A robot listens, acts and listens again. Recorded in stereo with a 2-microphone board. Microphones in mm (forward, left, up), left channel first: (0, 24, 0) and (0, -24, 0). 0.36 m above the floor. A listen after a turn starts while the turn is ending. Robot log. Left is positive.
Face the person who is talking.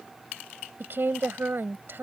note: The woman speaking: about 50° right or 130° right.
cmd yaw -50
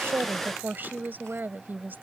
note: So it is at 60° right.
cmd yaw -60
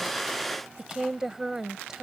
note: The woman speaking is now 15° right.
cmd yaw -15
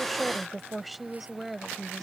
end: Facing the woman speaking.